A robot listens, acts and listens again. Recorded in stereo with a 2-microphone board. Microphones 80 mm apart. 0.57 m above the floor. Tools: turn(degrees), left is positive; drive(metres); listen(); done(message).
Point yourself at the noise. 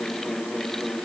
listen()
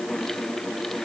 listen()
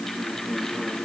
done("I can't make out anything to turn to.")